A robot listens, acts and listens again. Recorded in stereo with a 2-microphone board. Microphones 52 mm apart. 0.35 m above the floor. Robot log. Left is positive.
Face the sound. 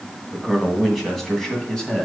cmd yaw +30
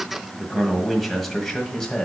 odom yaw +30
note: The man speaking: about 20° left or 160° left.
cmd yaw +20
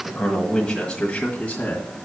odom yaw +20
note: The man speaking: about 25° left or 155° left.
cmd yaw +25
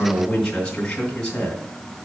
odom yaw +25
note: The man speaking: about 15° left or 165° left.
cmd yaw +15
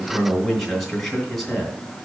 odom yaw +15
cmd yaw +30
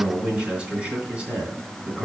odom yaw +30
note: So it is at 25° right.
cmd yaw -25
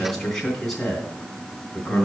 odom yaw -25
end: Facing the man speaking.